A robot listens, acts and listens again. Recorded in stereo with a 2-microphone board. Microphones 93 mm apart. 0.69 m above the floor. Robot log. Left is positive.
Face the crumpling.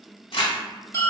note: The crumpling: about 75° left or 105° left.
cmd yaw +75
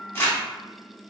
note: So it is at 30° left.
cmd yaw +30
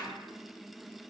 cmd idle
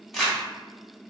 end: Facing the crumpling, 1 to 2 m away.